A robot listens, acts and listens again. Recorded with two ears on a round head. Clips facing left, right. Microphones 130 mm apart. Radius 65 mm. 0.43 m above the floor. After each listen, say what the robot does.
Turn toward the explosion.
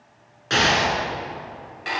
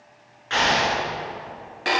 Turn 50° left.
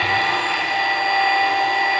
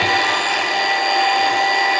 Keep listening.
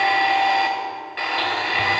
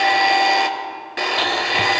I heard an explosion, but can't make it out now. It was about straight ahead or 80° left.